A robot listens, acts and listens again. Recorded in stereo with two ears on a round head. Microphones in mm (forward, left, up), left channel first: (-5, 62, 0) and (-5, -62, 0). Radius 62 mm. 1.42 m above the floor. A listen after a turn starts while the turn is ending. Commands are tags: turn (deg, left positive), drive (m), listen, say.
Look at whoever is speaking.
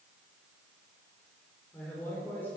<turn deg="30"/>
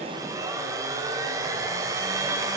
<listen/>
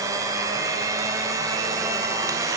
<listen/>
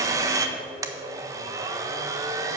<say>I heard a man speaking, but can't make it out now. It was about 15° right or 135° left.</say>